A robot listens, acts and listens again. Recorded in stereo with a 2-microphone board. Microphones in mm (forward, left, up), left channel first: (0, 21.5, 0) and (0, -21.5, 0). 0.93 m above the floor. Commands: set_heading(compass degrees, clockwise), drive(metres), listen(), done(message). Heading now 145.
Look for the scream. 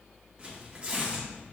listen()
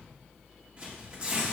listen()
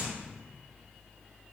done("I can't make out a scream to turn to.")